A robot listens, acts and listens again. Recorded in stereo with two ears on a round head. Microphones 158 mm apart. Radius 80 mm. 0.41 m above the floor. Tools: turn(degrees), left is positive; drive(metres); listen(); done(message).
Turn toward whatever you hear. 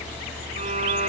turn(degrees=-35)
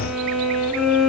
done("Facing the violin.")